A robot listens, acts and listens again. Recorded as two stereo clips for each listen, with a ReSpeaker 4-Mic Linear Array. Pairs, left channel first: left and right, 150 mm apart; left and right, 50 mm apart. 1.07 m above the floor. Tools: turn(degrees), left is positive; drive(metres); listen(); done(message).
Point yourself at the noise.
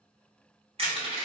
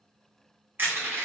turn(degrees=-40)
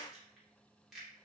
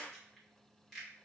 done("Found it: crushing, straight ahead, 1 to 2 m away.")